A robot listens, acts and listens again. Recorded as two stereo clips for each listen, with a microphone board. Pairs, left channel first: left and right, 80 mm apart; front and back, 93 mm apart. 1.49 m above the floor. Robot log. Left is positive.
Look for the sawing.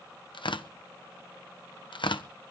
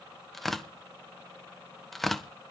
cmd idle
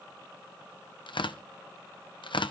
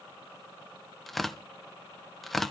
cmd idle
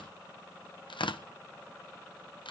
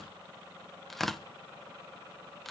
end: I can't make out sawing, only tearing paper.